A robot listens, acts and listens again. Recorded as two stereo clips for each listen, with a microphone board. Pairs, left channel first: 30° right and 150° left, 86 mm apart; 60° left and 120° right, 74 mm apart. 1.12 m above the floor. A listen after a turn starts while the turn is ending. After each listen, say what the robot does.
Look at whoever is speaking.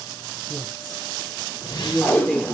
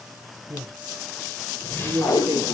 Turn 105° right.
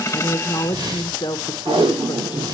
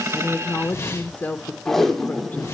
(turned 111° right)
Facing the woman speaking, under 1 m away.